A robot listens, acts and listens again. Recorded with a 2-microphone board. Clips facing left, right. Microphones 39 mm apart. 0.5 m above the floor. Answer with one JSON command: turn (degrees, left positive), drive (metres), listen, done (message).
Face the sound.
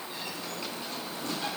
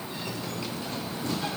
{"listen": true}
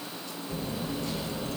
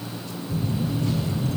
{"turn": 65}
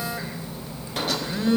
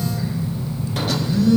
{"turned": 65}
{"turn": 40}
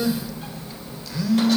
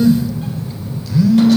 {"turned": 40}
{"done": "Facing the phone buzzing, 1 to 2 m away."}